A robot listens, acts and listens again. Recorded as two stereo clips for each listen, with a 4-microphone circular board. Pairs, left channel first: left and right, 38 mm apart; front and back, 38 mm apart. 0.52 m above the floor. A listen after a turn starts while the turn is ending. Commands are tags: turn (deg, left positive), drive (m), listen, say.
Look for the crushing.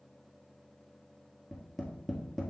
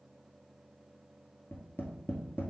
<listen/>
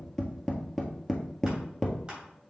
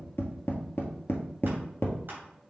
<listen/>
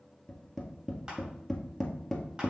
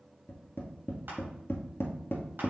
<say>I can't make out crushing, only tapping.</say>